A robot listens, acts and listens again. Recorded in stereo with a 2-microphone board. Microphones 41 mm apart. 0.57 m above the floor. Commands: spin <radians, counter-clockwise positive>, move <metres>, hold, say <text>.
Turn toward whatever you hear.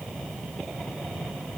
hold
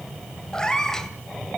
spin 0.52
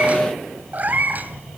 spin -0.79
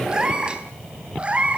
spin -0.52
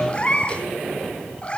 spin 0.44
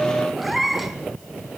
say Facing the cat meowing.